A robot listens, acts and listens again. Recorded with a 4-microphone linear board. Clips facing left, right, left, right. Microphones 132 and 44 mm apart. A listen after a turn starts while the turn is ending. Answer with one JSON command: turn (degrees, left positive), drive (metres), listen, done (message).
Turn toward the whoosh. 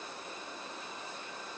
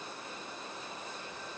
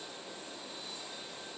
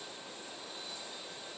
{"listen": true}
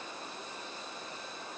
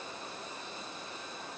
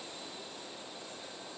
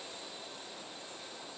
{"listen": true}
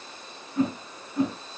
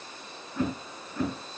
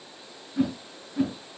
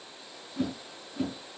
{"turn": 20}
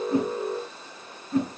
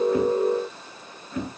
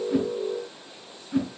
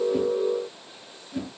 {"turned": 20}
{"turn": 140}
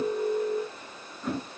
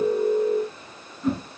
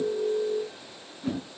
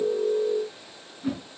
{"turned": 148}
{"done": "Found it: a whoosh, straight ahead, over 4 m away."}